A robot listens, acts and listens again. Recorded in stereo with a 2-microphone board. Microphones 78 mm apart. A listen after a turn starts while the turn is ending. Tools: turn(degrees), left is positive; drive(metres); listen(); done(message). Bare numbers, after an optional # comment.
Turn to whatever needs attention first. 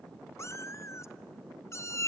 listen()
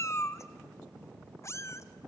listen()
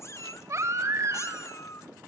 # The baby crying: about 35° right or 145° right.
turn(-35)
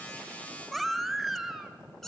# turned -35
done("Facing the baby crying, 1 to 2 m away.")